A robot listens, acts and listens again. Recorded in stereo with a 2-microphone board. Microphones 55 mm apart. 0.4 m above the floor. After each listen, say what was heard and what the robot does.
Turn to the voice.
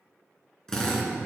Keep listening.
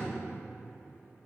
Keep listening.
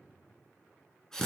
I can't make out anyone speaking to turn to.